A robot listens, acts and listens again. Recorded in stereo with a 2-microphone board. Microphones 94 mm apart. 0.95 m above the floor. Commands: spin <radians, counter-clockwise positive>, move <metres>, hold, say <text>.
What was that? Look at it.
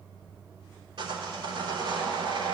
spin -1.13
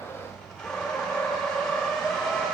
say Found it: sawing, straight ahead, 2 to 4 m away.